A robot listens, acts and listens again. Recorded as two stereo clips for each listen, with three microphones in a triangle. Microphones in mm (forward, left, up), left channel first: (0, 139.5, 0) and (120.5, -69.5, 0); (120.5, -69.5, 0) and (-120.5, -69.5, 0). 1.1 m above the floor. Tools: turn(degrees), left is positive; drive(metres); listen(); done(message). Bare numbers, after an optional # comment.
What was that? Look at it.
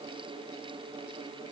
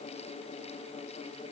listen()
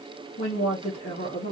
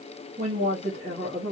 # The woman speaking: 130° left.
turn(130)
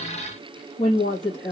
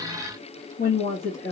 # The woman speaking is now 55° left.
turn(55)
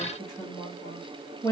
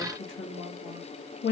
# The woman speaking is now 35° left.
turn(35)
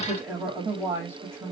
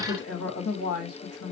# The woman speaking is now 15° left.
turn(15)
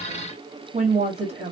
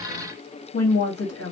done("Facing the woman speaking, 2 to 4 m away.")